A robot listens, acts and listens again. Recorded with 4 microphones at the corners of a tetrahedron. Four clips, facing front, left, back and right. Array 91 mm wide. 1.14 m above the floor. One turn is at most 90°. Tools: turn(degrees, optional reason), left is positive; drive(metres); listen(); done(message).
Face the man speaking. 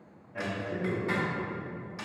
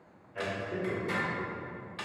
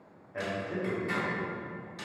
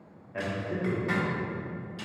turn(degrees=-90, reason="The man speaking: 120° right.")
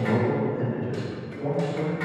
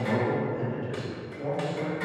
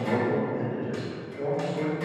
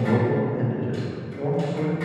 turn(degrees=-90, reason="The man speaking is now 115° right.")
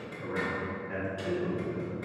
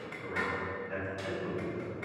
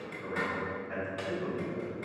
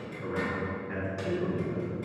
turn(degrees=-60, reason="The man speaking is now 60° right.")
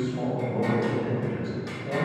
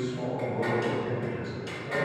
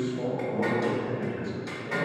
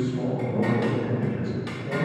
turn(degrees=10, reason="The man speaking is now 10° left.")
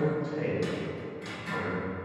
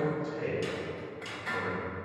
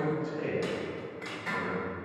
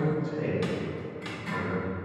done("Found it: a man speaking, straight ahead, 2 to 4 m away.")